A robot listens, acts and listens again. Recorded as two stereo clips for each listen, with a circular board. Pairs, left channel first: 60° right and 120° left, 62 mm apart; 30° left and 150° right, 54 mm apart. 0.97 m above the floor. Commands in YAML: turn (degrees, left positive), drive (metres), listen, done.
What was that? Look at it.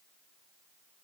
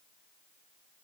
listen: true
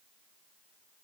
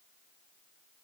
listen: true
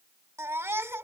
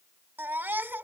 turn: 165
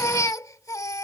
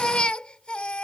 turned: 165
turn: -40
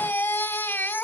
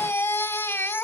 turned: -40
turn: -10
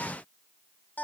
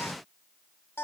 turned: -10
done: "Facing the baby crying."